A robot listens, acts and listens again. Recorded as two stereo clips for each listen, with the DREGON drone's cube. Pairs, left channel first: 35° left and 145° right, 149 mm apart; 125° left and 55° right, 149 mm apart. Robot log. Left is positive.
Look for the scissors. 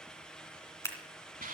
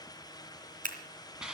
note: The scissors: 35° right.
cmd yaw -35
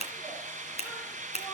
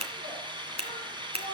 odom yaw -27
note: The scissors is now 10° right.
cmd yaw -10
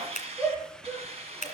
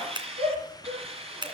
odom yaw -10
end: Found it: scissors, straight ahead, 2 to 4 m away.